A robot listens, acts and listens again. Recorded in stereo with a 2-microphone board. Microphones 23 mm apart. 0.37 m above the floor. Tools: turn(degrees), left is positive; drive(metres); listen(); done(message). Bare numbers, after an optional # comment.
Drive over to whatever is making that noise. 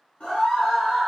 # The scream: about 55° left or 125° left.
turn(55)
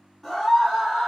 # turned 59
drive(1.0)
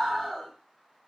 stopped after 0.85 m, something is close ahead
done("I am next to the scream.")